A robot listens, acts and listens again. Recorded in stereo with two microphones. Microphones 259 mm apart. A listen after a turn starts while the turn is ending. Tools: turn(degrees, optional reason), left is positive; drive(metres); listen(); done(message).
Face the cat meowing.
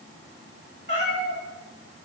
turn(degrees=-45, reason="The cat meowing: about 45° right or 135° right.")
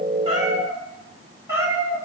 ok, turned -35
turn(degrees=-10, reason="So it is at 10° right.")
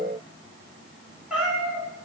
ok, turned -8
done("Found it: a cat meowing, straight ahead, 1 to 2 m away.")